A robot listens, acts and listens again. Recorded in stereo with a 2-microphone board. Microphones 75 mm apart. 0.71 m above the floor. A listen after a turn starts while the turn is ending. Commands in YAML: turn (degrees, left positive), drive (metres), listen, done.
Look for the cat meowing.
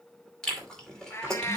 turn: 40
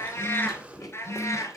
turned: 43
turn: 45
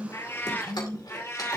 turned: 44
turn: 40
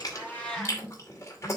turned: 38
turn: 10
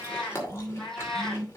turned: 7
turn: 10
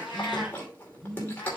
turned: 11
listen: true
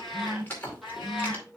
done: "Facing the cat meowing, 2 to 4 m away."